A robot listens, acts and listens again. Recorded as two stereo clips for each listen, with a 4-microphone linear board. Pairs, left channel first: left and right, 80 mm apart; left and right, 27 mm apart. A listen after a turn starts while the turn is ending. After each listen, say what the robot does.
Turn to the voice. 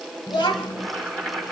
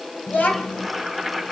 Turn 90° left.
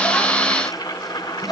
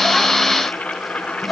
Facing the child speaking.